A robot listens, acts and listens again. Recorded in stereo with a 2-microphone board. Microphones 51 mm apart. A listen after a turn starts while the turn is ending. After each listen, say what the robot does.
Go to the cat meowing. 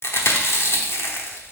Keep listening.
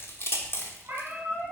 Turn 45° right.
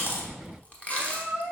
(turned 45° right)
Turn 90° right.
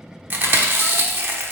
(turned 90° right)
Keep listening.
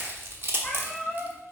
Drive 1.0 m forward.
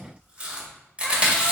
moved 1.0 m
Keep listening.
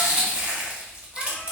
Keep listening.
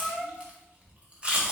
Drive 1.0 m forward.
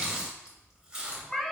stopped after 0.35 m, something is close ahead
I am next to the cat meowing.